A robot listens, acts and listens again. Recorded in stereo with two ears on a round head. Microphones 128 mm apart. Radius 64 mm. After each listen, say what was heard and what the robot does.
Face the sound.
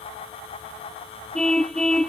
Turn 30° left.
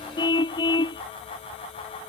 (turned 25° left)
So it is at 150° left. Turn 150° left.
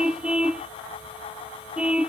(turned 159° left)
Facing the car horn.